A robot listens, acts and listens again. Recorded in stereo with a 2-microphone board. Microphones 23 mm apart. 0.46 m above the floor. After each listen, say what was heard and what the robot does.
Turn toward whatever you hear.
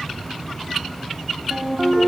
The ringtone: about 40° right or 140° right. Turn 40° right.
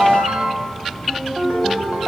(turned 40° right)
So it is at 100° right. Turn 100° right.
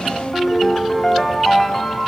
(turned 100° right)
Found it: a ringtone, straight ahead.